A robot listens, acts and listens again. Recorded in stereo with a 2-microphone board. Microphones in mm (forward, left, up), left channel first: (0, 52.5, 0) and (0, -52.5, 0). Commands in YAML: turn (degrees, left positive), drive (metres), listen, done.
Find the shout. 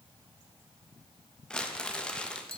listen: true
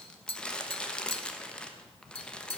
listen: true
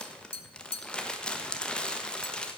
done: "I can't make out a shout, only tapping and crumpling."